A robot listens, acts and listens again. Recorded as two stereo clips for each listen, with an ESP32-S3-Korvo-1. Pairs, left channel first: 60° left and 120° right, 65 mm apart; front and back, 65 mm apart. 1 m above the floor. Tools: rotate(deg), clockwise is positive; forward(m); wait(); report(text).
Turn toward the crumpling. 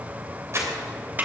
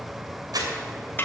rotate(165)
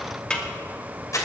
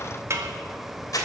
rotate(-25)
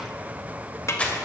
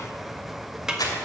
rotate(10)
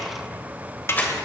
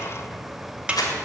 report("Found it: crumpling, straight ahead, 2 to 4 m away.")